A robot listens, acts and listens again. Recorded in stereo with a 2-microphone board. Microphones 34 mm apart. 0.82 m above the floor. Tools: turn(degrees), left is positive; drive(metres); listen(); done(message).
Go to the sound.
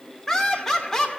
turn(degrees=30)
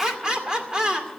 turn(degrees=-20)
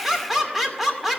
drive(metres=1.0)
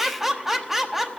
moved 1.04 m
drive(metres=1.0)
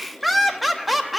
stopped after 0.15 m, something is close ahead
done("Arrived at the laughter, straight ahead.")